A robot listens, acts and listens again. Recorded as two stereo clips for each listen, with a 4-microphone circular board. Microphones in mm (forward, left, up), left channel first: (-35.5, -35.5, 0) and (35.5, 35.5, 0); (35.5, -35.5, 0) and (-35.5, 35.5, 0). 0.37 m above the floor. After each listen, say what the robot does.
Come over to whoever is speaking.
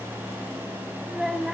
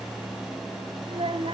Turn 130° left.
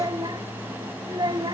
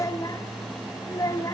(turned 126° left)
Drive 1.0 m forward.
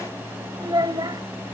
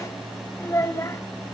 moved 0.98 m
Turn 10° left.
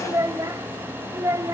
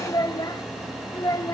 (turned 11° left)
Drive 1.0 m forward.
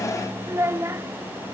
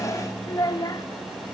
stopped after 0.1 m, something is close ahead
Turn 10° right.
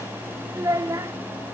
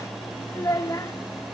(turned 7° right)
Arrived at the child speaking, straight ahead.